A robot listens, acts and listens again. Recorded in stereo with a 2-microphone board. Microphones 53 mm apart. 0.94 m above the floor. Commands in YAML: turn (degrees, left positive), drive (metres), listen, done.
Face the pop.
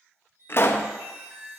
turn: 45
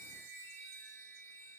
listen: true
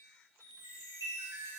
done: "I heard a pop, but can't make it out now. It was about straight ahead or 90° left."